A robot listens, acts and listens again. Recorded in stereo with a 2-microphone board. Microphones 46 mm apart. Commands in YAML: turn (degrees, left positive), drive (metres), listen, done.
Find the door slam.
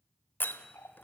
turn: 45
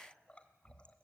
listen: true
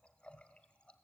done: "I heard a door slam, but can't make it out now. It was about straight ahead or 90° left."